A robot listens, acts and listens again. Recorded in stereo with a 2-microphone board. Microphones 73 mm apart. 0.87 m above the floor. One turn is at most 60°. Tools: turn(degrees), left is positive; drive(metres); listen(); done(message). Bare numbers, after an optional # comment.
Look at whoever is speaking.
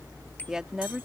turn(-30)
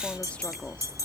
# So it is at 20° left.
turn(20)
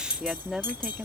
done("Found it: a woman speaking, straight ahead.")